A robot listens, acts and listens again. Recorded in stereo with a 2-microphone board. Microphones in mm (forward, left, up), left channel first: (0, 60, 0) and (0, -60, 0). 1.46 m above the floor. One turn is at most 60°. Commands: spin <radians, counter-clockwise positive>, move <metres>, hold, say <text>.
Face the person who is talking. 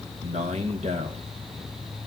spin -1.05
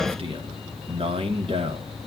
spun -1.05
spin -0.87
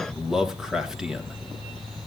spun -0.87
say Facing the man speaking.